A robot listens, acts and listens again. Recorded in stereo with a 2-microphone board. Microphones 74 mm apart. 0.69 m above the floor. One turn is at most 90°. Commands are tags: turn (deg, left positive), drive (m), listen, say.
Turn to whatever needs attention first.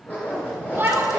<turn deg="-25"/>
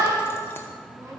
<turn deg="-90"/>
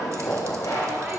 <turn deg="-35"/>
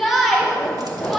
<say>Facing the shout.</say>